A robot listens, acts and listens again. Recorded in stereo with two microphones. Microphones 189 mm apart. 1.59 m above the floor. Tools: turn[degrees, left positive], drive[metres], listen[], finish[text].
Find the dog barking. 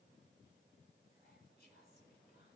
Action: listen[]
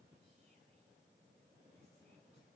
Action: listen[]
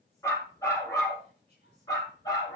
Thought: The dog barking: about 20° left or 160° left.
Action: turn[20]
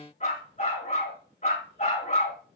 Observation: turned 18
Thought: The dog barking: about 40° left or 140° left.
Action: turn[40]
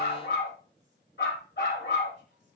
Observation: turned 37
Thought: So it is at 110° left.
Action: turn[110]
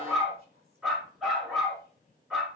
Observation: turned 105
Action: finish[Found it: a dog barking, straight ahead, over 4 m away.]